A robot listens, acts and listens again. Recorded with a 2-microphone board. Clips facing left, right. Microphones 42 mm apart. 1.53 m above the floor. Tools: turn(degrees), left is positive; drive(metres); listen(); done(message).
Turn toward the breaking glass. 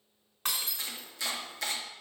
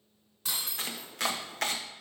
turn(degrees=50)
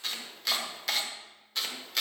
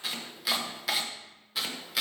listen()
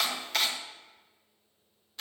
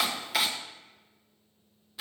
done("I heard breaking glass, but can't make it out now. It was about straight ahead or 80° left.")